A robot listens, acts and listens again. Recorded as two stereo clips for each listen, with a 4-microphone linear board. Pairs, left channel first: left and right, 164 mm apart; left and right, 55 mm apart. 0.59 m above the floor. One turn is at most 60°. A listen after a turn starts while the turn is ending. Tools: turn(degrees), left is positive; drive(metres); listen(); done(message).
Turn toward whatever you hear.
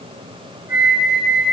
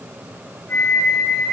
turn(degrees=60)
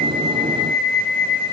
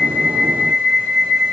turn(degrees=10)
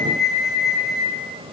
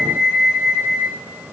done("Found it: a flute, straight ahead, 2 to 4 m away.")